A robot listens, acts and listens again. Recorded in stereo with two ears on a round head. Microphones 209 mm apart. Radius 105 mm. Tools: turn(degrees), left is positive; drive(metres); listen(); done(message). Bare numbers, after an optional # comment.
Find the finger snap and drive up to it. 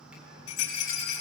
listen()
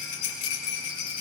listen()
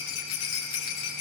done("I can't make out a finger snap to turn to.")